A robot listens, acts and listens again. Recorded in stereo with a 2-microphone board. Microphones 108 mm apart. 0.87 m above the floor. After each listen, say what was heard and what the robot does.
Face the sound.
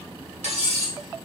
Turn 90° right.
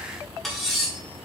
Facing the cutlery clinking.